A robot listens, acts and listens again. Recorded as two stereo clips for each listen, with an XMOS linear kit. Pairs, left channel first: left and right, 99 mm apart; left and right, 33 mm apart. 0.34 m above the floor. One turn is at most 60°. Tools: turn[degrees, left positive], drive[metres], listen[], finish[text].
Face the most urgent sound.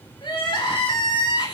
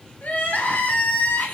Thought: The crying: about 55° left or 125° left.
Action: turn[55]
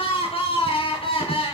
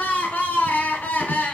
Thought: So it is at 70° left.
Action: turn[60]
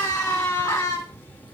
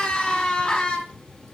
Thought: The crying is now 30° left.
Action: turn[30]
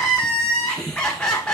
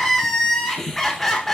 Action: finish[Found it: crying, straight ahead, 2 to 4 m away.]